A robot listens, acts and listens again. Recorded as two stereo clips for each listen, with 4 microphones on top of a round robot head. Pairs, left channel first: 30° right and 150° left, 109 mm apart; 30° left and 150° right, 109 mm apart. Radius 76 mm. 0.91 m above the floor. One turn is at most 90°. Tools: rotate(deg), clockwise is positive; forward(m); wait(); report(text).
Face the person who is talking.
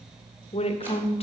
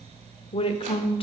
report("Facing the woman speaking, under 1 m away.")